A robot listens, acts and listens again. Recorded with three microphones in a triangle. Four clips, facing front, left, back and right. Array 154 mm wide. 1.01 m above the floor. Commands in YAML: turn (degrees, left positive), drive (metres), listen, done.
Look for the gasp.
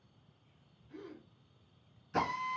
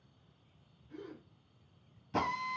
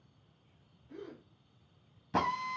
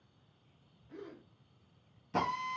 turn: -135
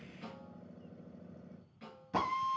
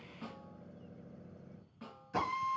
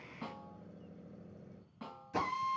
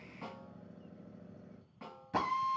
done: "I heard a gasp from this way, but can't make it out now."